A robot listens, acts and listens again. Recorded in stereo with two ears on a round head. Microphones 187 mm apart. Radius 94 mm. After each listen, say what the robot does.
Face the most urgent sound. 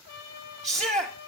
Turn 30° right.
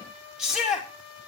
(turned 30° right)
Found it: a shout, straight ahead.